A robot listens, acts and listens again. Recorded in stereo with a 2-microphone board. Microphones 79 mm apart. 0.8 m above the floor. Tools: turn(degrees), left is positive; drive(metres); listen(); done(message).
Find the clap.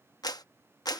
turn(degrees=55)
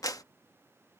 turn(degrees=55)
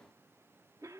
listen()
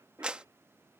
turn(degrees=-15)
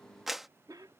done("Found it: a clap, straight ahead.")